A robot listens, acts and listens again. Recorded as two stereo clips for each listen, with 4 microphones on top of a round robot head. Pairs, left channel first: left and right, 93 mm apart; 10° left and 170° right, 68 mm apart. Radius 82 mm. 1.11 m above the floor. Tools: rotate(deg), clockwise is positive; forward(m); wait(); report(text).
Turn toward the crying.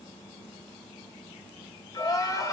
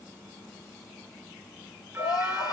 rotate(-40)
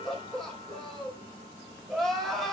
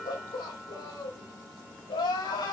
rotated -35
report("Found it: crying, straight ahead.")